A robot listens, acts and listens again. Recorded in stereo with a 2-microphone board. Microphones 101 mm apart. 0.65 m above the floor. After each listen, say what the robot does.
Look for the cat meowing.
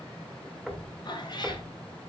Turn 45° left.
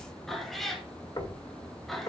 Found it: a cat meowing, straight ahead.